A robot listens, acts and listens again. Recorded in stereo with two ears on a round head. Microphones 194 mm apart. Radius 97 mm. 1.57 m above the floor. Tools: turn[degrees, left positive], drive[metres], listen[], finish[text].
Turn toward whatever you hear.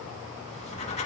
Thought: The writing: about 30° left or 150° left.
Action: turn[30]
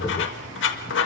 Thought: So it is at 115° left.
Action: turn[115]
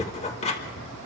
Thought: The writing is now 30° left.
Action: turn[30]
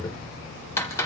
Thought: The writing is now 15° left.
Action: turn[15]
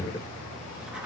Action: listen[]
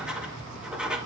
Action: finish[Found it: writing, straight ahead.]